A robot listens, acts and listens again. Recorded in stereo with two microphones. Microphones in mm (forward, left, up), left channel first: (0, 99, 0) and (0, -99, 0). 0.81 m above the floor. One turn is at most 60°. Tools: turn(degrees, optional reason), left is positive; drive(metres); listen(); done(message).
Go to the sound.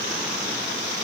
listen()
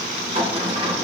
turn(degrees=-30, reason="The sliding door: about 30° right or 150° right.")
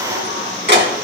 turn(degrees=-60, reason="So it is at 120° right.")
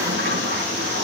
turn(degrees=-60, reason="The sliding door is now 75° right.")
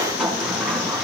drive(metres=1.0)
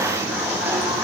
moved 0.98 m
turn(degrees=-10, reason="The sliding door is now 10° right.")
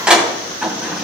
drive(metres=1.0)
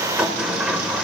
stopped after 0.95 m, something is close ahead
done("Arrived at the sliding door, straight ahead.")